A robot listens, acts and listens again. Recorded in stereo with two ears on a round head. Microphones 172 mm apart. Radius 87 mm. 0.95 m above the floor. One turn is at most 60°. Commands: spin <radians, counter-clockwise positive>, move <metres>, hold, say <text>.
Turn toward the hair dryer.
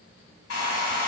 spin 1.05
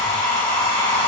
spin 0.26
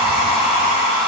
say Facing the hair dryer.